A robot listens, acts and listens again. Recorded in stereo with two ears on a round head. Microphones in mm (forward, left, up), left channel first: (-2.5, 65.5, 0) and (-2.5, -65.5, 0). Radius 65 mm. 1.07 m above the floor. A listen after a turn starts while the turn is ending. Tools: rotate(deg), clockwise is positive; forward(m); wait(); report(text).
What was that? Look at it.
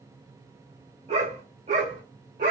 rotate(50)
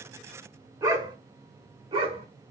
rotate(40)
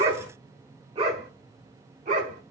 rotate(55)
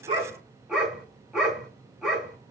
report("Facing the dog barking.")